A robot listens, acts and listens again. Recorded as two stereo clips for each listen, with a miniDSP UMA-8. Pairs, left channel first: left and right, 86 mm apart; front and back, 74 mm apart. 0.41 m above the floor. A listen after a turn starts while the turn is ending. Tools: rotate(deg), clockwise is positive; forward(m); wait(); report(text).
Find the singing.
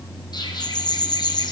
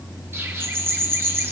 wait()
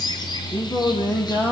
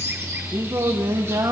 rotate(-155)
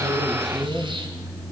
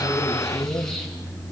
rotate(55)
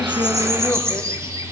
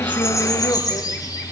wait()
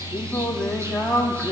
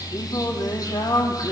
report("Found it: singing, straight ahead.")